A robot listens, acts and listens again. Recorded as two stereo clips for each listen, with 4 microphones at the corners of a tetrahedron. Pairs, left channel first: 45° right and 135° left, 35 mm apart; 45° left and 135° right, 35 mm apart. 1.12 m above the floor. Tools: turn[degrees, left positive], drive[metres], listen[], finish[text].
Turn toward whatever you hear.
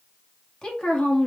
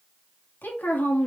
Thought: The woman speaking: 15° left.
Action: turn[15]
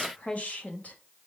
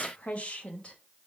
Thought: The woman speaking is now 10° right.
Action: turn[-10]
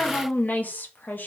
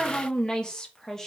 Thought: The woman speaking is now 35° right.
Action: turn[-35]
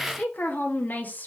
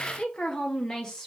Thought: The woman speaking is now 30° right.
Action: turn[-30]
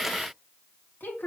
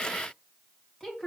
Thought: The woman speaking is now 30° right.
Action: turn[-30]
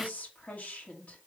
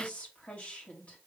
Action: finish[Facing the woman speaking, 2 to 4 m away.]